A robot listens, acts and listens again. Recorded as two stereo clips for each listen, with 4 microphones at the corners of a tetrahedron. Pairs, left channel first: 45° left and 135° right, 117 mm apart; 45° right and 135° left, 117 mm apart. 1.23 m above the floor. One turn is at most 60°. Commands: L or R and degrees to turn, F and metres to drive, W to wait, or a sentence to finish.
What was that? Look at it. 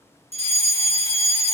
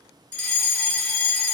R60
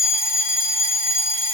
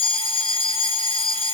R60
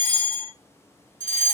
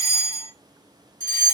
L10
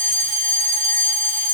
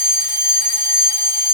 Found it: a fire alarm, straight ahead.